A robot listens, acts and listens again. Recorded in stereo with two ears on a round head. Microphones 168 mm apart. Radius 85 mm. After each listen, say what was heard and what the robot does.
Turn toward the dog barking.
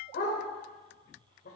The dog barking: about 55° left or 125° left. Turn 55° left.
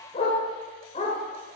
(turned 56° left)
So it is at 45° left. Turn 45° left.
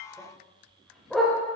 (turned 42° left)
Found it: a dog barking, straight ahead.